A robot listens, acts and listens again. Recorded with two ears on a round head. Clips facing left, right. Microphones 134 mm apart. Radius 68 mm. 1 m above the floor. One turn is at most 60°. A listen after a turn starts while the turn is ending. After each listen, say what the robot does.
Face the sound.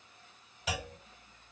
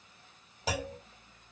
Turn 30° right.
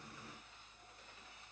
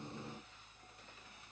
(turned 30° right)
Keep listening.
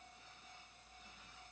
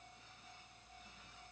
I heard a clunk, but can't make it out now. It was about straight ahead or 120° right.